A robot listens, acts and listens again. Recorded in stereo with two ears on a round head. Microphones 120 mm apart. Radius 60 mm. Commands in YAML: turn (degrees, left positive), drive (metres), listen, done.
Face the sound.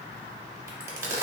turn: -20
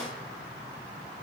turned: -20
listen: true
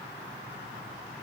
done: "I heard a crack, but can't make it out now. It was about straight ahead or 140° right."